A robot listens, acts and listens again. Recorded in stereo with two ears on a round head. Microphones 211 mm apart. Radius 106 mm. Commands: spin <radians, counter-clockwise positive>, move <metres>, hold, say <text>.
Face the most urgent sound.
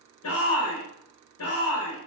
spin 1.13
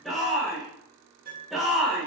say Facing the shout.